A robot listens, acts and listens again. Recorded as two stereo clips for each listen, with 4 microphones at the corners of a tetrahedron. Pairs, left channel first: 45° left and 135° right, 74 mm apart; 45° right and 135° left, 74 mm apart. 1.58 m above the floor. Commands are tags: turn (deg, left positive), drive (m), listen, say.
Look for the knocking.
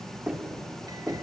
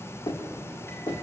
<turn deg="-55"/>
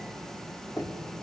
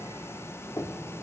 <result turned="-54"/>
<say>Facing the knocking, 2 to 4 m away.</say>